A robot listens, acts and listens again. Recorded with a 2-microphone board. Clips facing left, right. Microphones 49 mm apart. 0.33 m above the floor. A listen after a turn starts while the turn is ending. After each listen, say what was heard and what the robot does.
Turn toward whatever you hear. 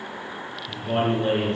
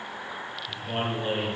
The man speaking: about 55° left or 125° left. Turn 55° left.
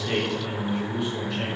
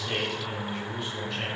Facing the man speaking.